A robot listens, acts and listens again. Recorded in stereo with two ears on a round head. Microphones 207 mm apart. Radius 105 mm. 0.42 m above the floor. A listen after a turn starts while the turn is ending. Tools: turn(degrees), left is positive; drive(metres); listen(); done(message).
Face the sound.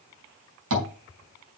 turn(degrees=-60)
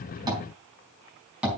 done("Found it: tapping, straight ahead, over 4 m away.")